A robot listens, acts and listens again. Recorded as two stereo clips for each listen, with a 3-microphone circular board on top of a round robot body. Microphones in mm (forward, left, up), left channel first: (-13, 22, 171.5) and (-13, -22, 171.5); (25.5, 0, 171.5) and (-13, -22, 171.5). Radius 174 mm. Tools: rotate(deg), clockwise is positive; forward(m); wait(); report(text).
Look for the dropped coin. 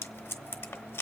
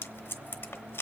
wait()
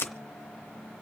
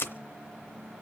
wait()
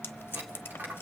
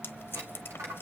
rotate(135)
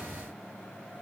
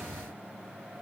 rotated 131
report("I heard a dropped coin from this way, but can't make it out now.")